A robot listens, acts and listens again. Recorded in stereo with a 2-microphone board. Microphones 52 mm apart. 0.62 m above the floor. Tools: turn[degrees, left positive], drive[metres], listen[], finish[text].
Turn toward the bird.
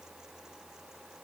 Action: listen[]
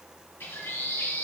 Thought: The bird: about 40° left or 140° left.
Action: turn[40]
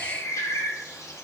Thought: So it is at 95° left.
Action: turn[95]
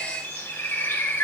Thought: The bird is now 50° left.
Action: turn[50]
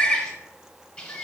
Thought: The bird is now 20° left.
Action: turn[20]
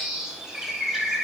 Action: finish[Found it: a bird, straight ahead.]